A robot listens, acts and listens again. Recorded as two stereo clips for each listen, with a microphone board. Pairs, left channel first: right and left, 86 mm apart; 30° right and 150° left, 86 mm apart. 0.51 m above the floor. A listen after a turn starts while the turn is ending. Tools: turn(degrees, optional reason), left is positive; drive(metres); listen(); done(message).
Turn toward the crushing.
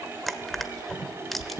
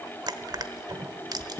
turn(degrees=180, reason="The crushing: straight behind.")
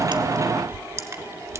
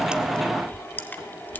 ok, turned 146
turn(degrees=35, reason="The crushing is now 35° left.")
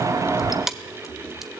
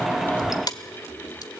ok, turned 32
done("Found it: crushing, straight ahead, 1 to 2 m away.")